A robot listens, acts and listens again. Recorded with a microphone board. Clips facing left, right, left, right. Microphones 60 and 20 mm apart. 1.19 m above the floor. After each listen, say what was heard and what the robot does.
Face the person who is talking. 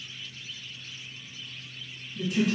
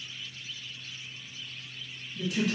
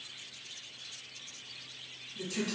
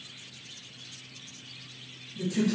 Turn 30° left.
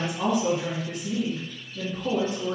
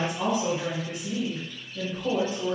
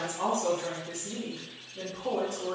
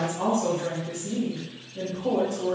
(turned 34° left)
So it is at 30° right. Turn 30° right.
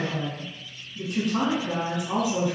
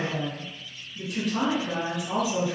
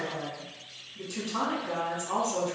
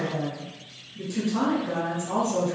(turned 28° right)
Found it: a woman speaking, straight ahead.